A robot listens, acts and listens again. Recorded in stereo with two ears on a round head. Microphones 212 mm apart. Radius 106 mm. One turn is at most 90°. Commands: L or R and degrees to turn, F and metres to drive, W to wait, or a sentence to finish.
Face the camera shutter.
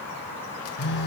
W
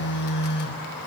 W
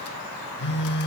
I can't make out a camera shutter to turn to.